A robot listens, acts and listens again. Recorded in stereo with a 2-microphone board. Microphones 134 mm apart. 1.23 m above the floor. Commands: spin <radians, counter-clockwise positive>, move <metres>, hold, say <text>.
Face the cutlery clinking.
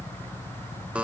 hold
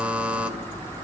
hold
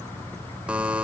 say I can't make out cutlery clinking to turn to.